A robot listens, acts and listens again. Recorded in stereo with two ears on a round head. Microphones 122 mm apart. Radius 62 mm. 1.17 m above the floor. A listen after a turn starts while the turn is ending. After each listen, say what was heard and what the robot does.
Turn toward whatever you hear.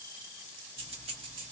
The keys jangling: about 40° right or 140° right. Turn 40° right.
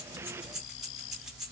Facing the keys jangling.